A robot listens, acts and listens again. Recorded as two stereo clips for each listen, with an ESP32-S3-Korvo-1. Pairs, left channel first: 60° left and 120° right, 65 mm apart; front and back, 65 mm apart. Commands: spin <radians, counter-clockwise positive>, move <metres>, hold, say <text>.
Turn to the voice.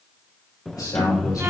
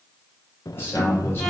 spin 0.96
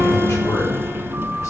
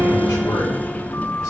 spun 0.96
hold
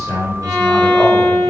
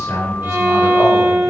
spin 0.26
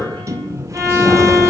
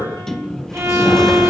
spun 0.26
say Facing the man speaking, over 4 m away.